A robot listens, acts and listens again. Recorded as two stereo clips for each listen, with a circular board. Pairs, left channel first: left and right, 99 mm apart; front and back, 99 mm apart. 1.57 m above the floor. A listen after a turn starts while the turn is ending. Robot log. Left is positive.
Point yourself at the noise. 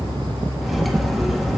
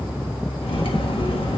end: Found it: cutlery clinking, straight ahead, 1 to 2 m away.